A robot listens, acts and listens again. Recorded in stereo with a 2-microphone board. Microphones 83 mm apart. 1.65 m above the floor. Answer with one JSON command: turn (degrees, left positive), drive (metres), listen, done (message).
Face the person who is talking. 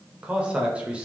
{"turn": -30}
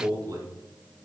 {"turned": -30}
{"turn": -135}
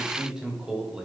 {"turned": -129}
{"turn": -10}
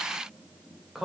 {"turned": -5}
{"done": "Found it: a man speaking, straight ahead, under 1 m away."}